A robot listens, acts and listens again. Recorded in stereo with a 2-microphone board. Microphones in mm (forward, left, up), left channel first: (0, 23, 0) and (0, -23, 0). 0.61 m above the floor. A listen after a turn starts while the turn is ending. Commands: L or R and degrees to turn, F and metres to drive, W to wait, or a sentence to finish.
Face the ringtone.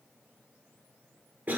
W
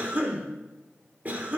W
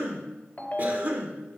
L35
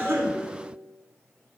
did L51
L95
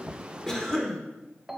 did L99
Facing the ringtone.